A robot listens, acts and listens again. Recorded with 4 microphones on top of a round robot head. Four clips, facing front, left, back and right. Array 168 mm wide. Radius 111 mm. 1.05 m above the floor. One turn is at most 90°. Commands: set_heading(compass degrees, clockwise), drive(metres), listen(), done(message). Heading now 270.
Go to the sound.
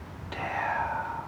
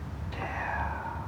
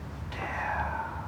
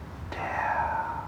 set_heading(335)
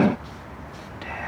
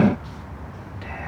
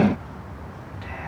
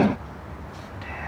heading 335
listen()
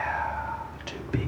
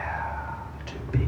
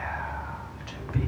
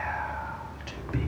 drive(1.0)
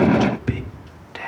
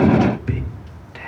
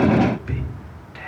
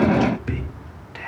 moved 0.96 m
drive(1.0)
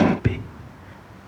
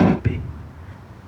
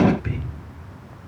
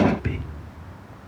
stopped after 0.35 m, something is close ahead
done("Arrived at the whispering, straight ahead.")